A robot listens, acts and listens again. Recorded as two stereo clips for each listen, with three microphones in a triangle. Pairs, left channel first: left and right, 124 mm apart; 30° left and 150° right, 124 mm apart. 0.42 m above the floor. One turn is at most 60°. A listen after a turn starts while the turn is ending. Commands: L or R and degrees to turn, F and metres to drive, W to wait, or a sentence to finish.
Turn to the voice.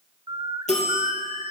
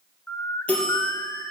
W
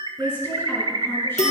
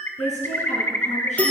L20
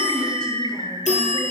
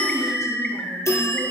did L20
W
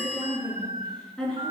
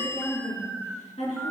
Found it: a woman speaking, straight ahead, over 4 m away.